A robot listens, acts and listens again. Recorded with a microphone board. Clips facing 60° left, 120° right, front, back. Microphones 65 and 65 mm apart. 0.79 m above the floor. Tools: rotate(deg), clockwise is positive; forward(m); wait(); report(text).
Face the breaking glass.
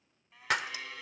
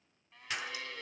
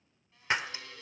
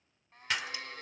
rotate(-60)
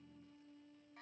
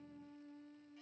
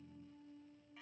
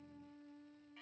report("I heard breaking glass from this way, but can't make it out now.")